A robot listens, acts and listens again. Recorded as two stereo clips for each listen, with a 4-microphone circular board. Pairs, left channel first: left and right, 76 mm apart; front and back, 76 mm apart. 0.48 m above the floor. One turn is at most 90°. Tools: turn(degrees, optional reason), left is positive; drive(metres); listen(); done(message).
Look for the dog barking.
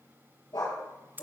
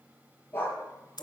turn(degrees=65, reason="The dog barking: 65° left.")
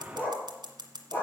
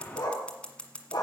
turn(degrees=30, reason="The dog barking is now 30° left.")
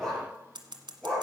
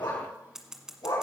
turn(degrees=15, reason="The dog barking is now 15° left.")
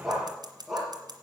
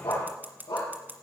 done("Found it: a dog barking, straight ahead.")